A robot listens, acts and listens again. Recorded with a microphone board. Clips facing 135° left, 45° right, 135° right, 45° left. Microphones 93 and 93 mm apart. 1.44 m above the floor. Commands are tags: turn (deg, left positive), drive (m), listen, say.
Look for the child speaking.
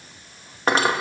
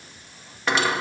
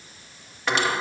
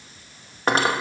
<listen/>
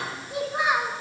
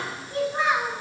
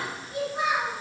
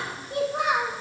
<turn deg="65"/>
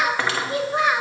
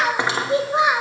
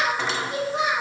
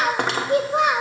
<turn deg="30"/>
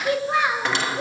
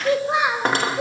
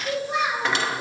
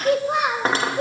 <turn deg="40"/>
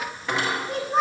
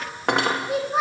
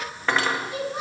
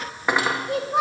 <turn deg="40"/>
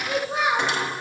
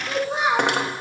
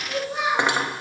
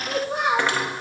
<turn deg="10"/>
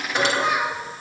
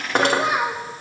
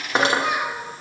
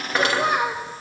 <say>Found it: a child speaking, straight ahead, 1 to 2 m away.</say>